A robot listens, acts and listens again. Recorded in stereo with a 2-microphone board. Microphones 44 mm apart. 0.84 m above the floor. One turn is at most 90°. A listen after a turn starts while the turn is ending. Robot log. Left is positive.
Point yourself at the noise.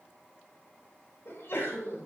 note: The sneeze: about 55° left or 125° left.
cmd yaw +55
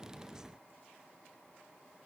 cmd idle
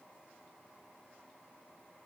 end: I heard a sneeze, but can't make it out now. It was about straight ahead or 70° left.